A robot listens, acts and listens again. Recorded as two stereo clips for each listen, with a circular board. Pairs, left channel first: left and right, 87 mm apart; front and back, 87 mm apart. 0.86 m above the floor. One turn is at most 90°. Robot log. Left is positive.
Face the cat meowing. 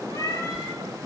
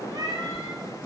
note: The cat meowing: 135° left.
cmd yaw +90
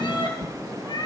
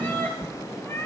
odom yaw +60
note: The cat meowing is now 60° left.
cmd yaw +60
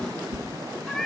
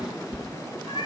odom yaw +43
end: Found it: a cat meowing, straight ahead.